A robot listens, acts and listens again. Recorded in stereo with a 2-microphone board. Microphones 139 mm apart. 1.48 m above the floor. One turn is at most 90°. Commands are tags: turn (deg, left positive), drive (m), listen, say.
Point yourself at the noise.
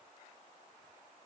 <listen/>
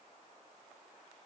<listen/>
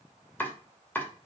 <turn deg="30"/>
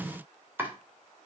<turn deg="-15"/>
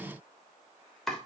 <say>Found it: chopping, straight ahead.</say>